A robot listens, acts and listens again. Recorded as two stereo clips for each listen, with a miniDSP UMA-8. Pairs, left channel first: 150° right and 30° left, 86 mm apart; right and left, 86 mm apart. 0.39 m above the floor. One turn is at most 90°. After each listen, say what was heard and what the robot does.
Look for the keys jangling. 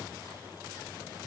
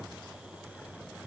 Keep listening.
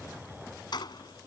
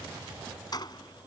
The keys jangling: 125° right. Turn 90° right.
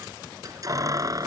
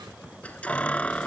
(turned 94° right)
The keys jangling is now 15° right. Turn 15° right.
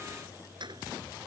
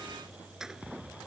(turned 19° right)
Facing the keys jangling.